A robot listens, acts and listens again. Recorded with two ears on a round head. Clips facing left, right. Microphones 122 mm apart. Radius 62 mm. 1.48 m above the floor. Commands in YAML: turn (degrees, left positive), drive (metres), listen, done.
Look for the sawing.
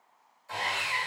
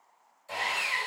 turn: -30
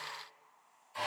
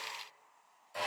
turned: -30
turn: -120
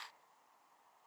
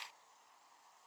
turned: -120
listen: true
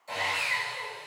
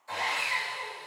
turn: 25
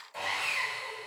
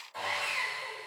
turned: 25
turn: 10
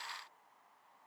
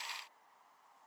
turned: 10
listen: true
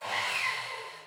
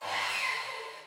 done: "Found it: sawing, straight ahead."